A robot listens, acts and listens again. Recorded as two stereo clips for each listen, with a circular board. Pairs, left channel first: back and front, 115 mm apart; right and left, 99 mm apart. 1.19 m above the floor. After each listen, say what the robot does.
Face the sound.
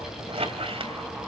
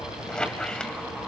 Turn 10° right.
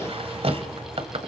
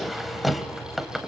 Facing the squeak, 1 to 2 m away.